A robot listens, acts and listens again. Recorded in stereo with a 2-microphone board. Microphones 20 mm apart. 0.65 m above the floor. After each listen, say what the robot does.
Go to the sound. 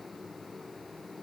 Keep listening.
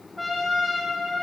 Turn 30° right.
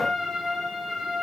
Turn 135° right.
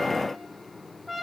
Turn 15° left.
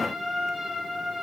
Drive 1.0 m forward.
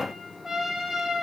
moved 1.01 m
Turn 10° right.
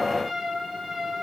Drive 1.0 m forward.
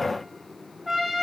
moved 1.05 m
Drive 1.0 m forward.
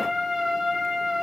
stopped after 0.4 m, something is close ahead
I am next to the trumpet.